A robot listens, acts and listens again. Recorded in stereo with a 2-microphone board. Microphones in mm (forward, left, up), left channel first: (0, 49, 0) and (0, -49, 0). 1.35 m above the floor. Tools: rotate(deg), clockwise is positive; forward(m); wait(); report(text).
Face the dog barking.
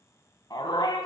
rotate(-45)
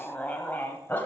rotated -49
rotate(-25)
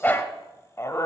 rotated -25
rotate(-35)
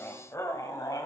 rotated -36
rotate(-45)
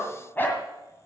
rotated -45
rotate(-20)
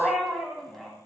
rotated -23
report("Facing the dog barking.")